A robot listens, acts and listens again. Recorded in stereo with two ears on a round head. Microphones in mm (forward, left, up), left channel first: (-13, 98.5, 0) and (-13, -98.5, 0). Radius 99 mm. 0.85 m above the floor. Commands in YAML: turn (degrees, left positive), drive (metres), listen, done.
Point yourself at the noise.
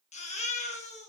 turn: 35
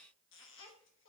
listen: true
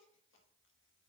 listen: true
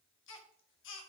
turn: 110
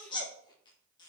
turn: 20
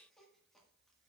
listen: true
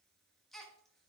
done: "Facing the baby crying."